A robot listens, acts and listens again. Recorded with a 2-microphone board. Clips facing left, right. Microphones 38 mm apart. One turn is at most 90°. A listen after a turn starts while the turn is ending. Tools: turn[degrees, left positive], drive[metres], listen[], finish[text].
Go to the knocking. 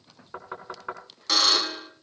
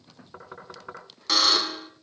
Thought: The knocking: about 30° left or 150° left.
Action: turn[30]
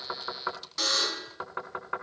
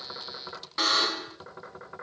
Thought: So it is at 120° left.
Action: turn[90]
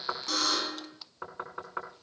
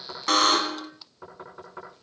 Thought: The knocking is now 35° left.
Action: turn[35]
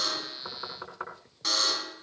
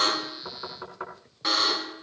Action: drive[1.0]
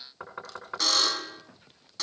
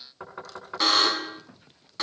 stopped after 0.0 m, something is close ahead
Action: finish[Something is in my way. I am facing the knocking but have not reached it.]